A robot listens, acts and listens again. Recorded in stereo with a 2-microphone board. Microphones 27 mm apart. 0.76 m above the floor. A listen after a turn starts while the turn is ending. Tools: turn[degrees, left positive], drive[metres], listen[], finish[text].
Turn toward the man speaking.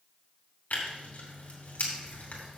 Action: listen[]
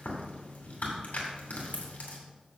Action: listen[]
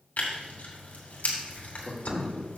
Thought: The man speaking: about 70° left or 110° left.
Action: turn[70]
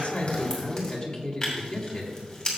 Thought: So it is at 20° left.
Action: turn[20]
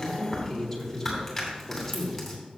Thought: The man speaking is now 10° left.
Action: turn[10]
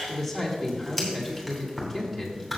Action: finish[Facing the man speaking, 2 to 4 m away.]